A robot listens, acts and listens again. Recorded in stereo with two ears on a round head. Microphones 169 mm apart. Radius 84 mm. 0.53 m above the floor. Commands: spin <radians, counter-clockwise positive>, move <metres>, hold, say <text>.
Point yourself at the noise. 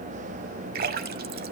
spin -0.87
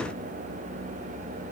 hold
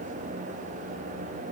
say I heard a splash, but can't make it out now. It was about straight ahead or 80° right.